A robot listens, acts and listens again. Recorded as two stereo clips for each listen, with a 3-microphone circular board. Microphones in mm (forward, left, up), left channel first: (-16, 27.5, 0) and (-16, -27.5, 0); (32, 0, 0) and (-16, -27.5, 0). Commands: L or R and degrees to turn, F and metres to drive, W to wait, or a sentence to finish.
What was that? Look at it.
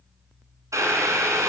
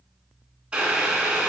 R80
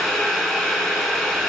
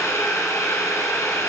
Facing the boiling, 1 to 2 m away.